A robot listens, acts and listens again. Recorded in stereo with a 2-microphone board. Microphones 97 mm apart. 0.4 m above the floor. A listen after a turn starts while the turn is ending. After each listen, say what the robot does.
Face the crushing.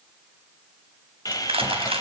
Turn 75° right.
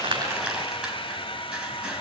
Found it: crushing, straight ahead.